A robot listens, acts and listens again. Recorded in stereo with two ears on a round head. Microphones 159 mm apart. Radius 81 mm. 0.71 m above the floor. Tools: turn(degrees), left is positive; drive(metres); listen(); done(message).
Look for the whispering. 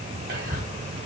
turn(degrees=-60)
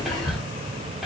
done("Facing the whispering, 2 to 4 m away.")